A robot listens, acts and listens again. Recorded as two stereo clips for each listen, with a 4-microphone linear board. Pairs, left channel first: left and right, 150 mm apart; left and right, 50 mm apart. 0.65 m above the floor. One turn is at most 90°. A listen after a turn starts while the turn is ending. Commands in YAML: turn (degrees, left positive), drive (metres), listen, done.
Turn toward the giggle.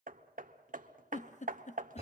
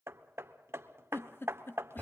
turn: 60
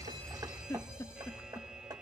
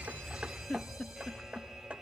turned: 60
turn: 25
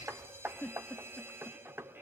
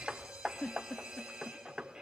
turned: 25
turn: 15
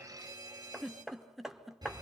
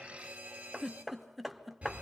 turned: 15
done: "Found it: a giggle, straight ahead, under 1 m away."